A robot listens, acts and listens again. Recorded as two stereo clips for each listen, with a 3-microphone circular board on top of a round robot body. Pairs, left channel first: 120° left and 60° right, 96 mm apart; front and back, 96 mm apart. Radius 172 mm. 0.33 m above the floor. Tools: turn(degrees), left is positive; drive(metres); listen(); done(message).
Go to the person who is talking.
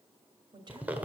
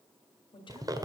turn(degrees=-25)
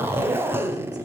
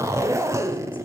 listen()
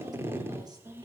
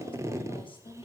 turn(degrees=-15)
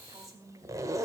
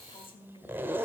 drive(metres=1.0)
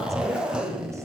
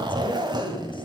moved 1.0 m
listen()
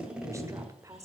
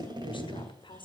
drive(metres=1.0)
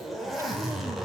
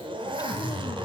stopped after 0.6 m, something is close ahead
listen()
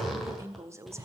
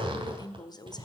turn(degrees=-10)
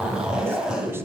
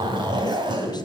listen()
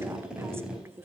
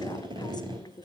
done("Arrived at the woman speaking, straight ahead.")